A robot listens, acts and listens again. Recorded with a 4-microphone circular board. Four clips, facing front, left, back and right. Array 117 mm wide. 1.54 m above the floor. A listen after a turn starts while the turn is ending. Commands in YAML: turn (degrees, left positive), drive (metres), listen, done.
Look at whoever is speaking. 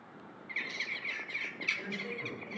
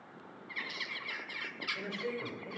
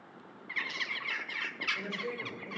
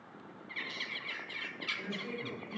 turn: 125
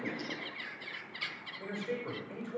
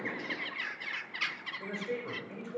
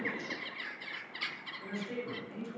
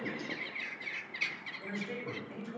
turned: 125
turn: 40
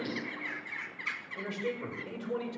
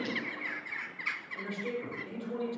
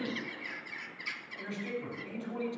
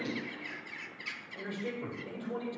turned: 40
done: "Found it: a man speaking, straight ahead, over 4 m away."